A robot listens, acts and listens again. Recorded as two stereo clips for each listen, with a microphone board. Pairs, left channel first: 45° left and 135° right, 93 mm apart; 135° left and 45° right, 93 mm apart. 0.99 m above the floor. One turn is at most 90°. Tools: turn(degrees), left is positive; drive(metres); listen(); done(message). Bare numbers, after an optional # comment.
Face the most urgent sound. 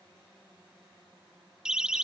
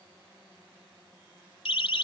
# The siren: 145° left.
turn(90)
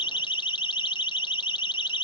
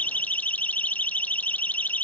# The siren is now 65° left.
turn(65)
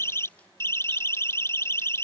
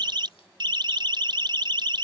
# The siren is now 15° right.
turn(-15)
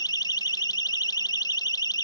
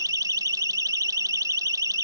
done("Facing the siren.")